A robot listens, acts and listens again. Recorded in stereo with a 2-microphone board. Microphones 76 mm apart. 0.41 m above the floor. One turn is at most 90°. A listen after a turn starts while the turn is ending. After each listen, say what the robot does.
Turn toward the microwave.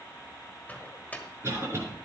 Turn 20° left.
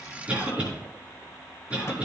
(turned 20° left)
Keep listening.
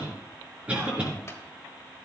Keep listening.
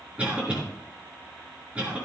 I heard a microwave, but can't make it out now. It was about straight ahead or 140° left.